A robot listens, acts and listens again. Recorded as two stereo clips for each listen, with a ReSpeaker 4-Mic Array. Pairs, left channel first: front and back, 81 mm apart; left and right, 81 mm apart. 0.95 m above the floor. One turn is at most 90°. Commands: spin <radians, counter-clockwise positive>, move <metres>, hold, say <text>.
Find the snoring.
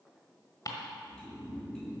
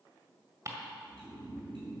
spin -1.57
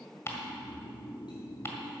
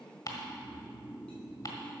spin -0.35
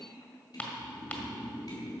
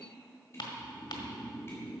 say Facing the snoring, 1 to 2 m away.